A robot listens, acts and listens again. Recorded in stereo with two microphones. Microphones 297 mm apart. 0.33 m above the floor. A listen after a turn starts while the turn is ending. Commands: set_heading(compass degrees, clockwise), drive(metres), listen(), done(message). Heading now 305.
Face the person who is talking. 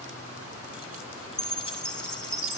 listen()
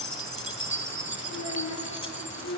set_heading(235)
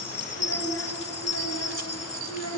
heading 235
set_heading(180)
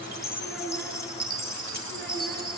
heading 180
done("Found it: a child speaking, straight ahead.")